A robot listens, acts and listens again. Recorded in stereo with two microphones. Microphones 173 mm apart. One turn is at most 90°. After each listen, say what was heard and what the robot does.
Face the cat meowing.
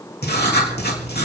Keep listening.
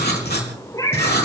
The cat meowing: about 20° left or 160° left. Turn 20° left.
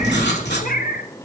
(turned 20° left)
So it is at 120° left. Turn 90° left.
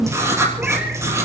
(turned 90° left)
Nothing new. It was at 30° left. Turn 30° left.
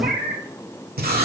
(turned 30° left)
The cat meowing is now 70° right. Turn 70° right.
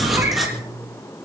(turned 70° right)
Keep listening.
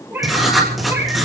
The cat meowing is now 10° right. Turn 10° right.
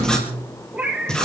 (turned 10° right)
Facing the cat meowing, 2 to 4 m away.